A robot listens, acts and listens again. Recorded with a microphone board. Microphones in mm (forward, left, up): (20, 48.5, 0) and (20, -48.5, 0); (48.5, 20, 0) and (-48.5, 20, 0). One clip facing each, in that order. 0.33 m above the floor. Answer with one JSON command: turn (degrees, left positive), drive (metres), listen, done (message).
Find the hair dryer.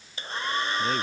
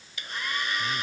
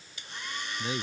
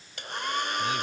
{"turn": 150}
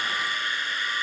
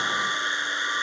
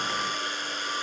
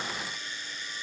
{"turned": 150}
{"turn": -25}
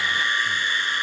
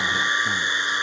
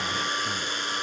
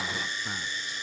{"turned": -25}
{"turn": -20}
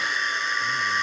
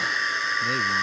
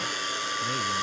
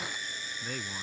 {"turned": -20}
{"done": "Facing the hair dryer."}